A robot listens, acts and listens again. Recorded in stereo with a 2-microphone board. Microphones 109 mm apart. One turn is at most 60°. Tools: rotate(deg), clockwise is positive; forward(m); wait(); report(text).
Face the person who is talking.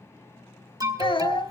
rotate(-50)
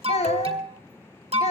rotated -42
rotate(-60)
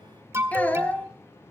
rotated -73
rotate(-15)
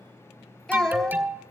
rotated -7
report("Found it: a child speaking, straight ahead, 2 to 4 m away.")